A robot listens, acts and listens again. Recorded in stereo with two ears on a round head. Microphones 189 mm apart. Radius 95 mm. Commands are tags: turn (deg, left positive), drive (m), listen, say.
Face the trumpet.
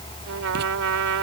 <turn deg="-90"/>
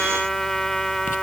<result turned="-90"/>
<say>Facing the trumpet.</say>